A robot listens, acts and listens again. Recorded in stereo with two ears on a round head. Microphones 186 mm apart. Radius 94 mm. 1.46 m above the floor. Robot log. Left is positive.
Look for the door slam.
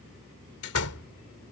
cmd yaw +90
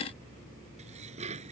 end: Facing where the door slam came from. I can't hear it now.